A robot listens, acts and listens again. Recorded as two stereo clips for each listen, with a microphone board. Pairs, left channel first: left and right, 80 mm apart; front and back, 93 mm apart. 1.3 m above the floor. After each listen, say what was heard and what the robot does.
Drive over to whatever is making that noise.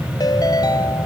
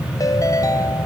The ringtone: 50° left. Turn 50° left.
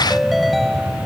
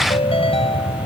Drive 1.0 m forward.
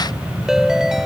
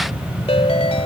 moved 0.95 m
Drive 1.0 m forward.
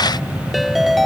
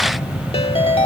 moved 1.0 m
Drive 1.0 m forward.
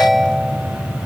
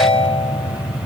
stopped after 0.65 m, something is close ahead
Arrived at the ringtone, straight ahead.